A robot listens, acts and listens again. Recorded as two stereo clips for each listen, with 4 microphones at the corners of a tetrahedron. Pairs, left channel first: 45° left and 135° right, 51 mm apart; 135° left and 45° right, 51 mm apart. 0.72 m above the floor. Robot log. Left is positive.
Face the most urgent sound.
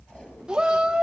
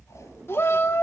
note: The shout: 155° left.
cmd yaw +155
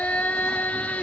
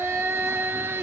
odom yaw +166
note: The shout is now 10° right.
cmd yaw -10
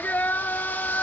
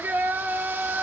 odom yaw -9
end: Found it: a shout, straight ahead, 1 to 2 m away.